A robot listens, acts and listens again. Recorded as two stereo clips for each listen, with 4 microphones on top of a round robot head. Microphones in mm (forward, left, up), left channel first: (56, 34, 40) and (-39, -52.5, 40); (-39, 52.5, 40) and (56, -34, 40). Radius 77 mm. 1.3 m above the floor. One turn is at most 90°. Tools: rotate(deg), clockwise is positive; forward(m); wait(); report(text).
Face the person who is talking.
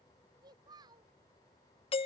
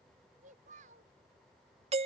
rotate(80)
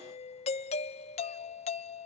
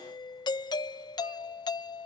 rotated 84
wait()
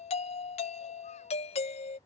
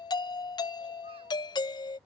wait()
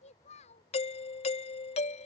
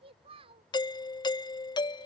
report("Found it: a child speaking, straight ahead.")